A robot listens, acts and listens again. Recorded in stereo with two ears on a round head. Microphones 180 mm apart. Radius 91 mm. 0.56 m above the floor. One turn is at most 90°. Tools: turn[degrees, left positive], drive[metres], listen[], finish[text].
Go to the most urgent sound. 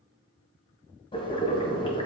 Action: listen[]
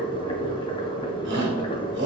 Thought: The shout: about 65° right or 115° right.
Action: turn[-65]
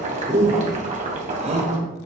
Thought: So it is at 35° right.
Action: turn[-35]
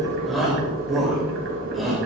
Action: drive[1.0]
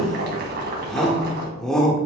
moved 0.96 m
Action: drive[1.0]
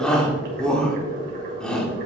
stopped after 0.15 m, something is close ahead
Action: finish[Arrived at the shout, straight ahead.]